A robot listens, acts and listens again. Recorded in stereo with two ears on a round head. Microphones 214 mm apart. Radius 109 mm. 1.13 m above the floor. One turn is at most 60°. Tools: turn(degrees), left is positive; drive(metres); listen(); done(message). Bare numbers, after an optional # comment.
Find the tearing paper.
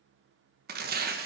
# The tearing paper: about 40° right or 140° right.
turn(-40)
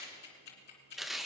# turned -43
done("Facing the tearing paper, 1 to 2 m away.")